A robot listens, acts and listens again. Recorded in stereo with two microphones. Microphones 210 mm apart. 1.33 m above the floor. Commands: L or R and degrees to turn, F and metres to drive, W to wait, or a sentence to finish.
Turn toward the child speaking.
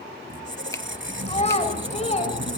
L30
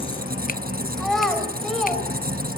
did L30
Found it: a child speaking, straight ahead.